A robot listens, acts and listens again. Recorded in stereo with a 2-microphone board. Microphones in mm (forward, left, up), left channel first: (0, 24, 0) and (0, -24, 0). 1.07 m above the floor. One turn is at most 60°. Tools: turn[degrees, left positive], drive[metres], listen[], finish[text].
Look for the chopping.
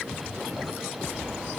Action: listen[]
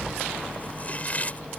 Thought: The chopping: about 30° left or 150° left.
Action: turn[30]
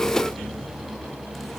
Action: listen[]
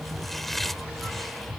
Action: finish[Facing the chopping.]